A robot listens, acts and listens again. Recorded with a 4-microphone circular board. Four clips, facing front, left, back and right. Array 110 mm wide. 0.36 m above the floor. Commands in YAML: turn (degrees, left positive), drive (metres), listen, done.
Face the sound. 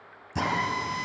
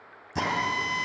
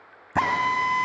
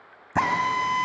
turn: -140
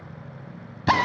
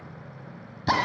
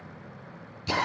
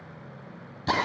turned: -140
turn: 10
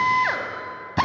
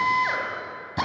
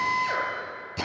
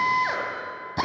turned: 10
done: "Found it: a drill, straight ahead, 2 to 4 m away."